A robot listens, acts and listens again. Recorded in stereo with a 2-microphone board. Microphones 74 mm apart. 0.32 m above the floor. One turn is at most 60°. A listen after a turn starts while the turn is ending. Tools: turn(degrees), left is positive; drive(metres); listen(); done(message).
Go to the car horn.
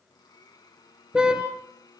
turn(degrees=-30)
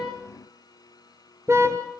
turn(degrees=-60)
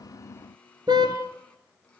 turn(degrees=-60)
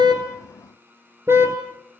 turn(degrees=-35)
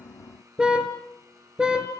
turn(degrees=-10)
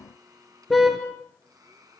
drive(metres=1.0)
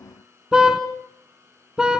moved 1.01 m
turn(degrees=-10)
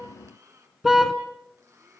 drive(metres=1.0)
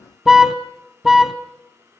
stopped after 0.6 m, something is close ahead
done("Arrived at the car horn, straight ahead.")